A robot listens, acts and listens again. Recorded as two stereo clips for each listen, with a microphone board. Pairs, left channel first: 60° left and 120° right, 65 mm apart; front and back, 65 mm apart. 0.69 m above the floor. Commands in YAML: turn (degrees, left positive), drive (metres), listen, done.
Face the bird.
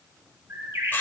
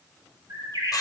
turn: -170
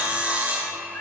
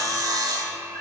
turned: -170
listen: true
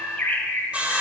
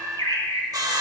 done: "Facing the bird, 1 to 2 m away."